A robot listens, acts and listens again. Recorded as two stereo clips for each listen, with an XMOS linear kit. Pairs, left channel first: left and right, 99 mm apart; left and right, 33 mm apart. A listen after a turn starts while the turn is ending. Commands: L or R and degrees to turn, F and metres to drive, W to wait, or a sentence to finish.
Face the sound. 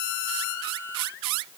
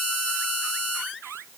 W
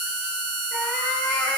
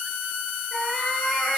L30
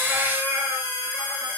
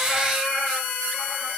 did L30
R20
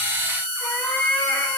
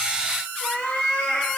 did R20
L15
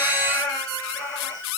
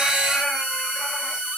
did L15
Facing the cat meowing, over 4 m away.